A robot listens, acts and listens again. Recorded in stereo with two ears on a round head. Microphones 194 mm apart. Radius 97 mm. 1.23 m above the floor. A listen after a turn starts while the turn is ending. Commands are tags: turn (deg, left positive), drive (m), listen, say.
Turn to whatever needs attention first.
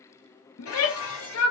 <turn deg="70"/>
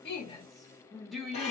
<say>Found it: a shout, straight ahead, under 1 m away.</say>